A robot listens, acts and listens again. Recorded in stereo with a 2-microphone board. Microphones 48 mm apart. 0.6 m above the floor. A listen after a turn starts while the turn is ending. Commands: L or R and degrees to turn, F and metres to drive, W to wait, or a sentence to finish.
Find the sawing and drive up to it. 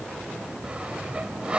R25
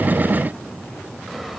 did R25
W
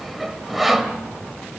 F1.0
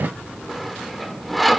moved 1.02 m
F1.0
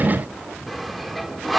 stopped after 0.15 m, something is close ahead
Arrived at the sawing, straight ahead.